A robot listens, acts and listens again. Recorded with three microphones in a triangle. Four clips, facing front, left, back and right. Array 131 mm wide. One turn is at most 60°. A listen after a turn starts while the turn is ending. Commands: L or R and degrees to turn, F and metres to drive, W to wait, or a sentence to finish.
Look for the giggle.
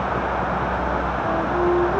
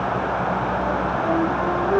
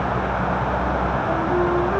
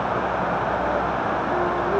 W
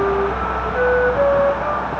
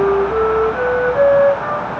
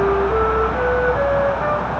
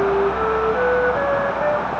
W
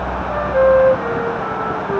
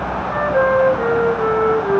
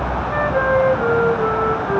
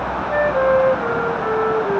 I can't make out a giggle to turn to.